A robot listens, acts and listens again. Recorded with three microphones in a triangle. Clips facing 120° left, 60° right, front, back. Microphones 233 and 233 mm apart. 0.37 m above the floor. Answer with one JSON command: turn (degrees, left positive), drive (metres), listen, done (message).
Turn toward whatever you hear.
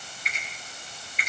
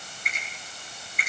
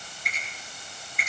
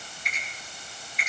{"turn": -25}
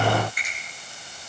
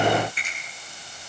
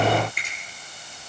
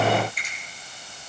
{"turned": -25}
{"done": "Found it: a finger snap, straight ahead, over 4 m away."}